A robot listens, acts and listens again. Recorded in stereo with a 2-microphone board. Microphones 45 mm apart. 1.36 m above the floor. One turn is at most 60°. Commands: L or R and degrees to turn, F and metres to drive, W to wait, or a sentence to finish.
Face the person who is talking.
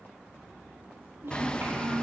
R60
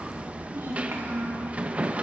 R60
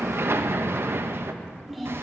Found it: a child speaking, straight ahead, 2 to 4 m away.